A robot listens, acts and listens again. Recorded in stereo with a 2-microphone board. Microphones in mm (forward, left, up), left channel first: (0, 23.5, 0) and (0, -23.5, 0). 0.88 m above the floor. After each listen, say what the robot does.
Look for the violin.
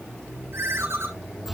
Keep listening.
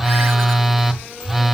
Keep listening.
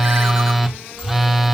I can't make out a violin to turn to.